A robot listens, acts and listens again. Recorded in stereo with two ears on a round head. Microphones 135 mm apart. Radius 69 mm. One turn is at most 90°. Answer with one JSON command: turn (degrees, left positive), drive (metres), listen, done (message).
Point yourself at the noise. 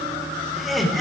{"turn": 30}
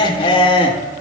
{"turn": 90}
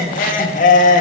{"turn": 50}
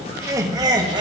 {"turn": -25}
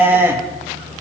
{"turn": -15}
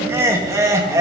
{"turn": -20}
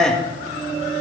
{"done": "Facing the laughter, 1 to 2 m away."}